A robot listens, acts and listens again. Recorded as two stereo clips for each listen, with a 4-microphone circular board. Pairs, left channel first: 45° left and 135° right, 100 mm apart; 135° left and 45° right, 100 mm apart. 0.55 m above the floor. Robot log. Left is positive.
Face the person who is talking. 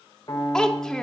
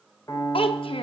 note: The child speaking: 130° left.
cmd yaw +130
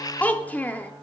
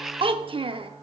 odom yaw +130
note: The child speaking is now 30° right.
cmd yaw -30
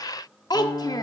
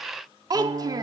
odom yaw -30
end: Facing the child speaking, under 1 m away.